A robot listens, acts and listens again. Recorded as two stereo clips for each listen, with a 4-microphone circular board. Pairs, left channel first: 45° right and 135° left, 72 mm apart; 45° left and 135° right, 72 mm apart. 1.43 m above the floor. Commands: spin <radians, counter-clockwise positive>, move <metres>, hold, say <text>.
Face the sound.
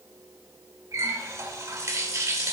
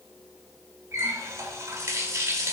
spin 3.05
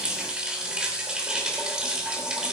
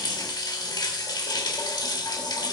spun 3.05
spin 0.96
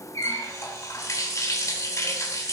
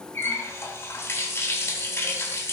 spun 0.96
say Found it: a running tap, straight ahead.